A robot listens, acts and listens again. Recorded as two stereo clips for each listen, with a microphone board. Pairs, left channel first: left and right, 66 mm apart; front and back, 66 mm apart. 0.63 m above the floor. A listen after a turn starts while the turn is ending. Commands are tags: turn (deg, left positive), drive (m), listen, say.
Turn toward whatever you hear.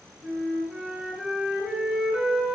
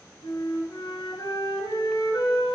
<turn deg="-10"/>
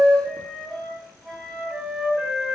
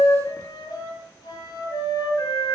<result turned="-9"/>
<say>Found it: a flute, straight ahead.</say>